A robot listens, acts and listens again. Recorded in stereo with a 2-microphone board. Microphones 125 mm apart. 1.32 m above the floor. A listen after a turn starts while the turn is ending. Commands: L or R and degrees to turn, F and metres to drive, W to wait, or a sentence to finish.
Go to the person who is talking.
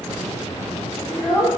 L35
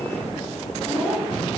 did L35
F1.0
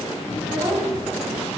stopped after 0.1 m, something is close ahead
W
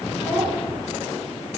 W
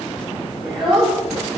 Something is in my way. I am facing the child speaking but have not reached it.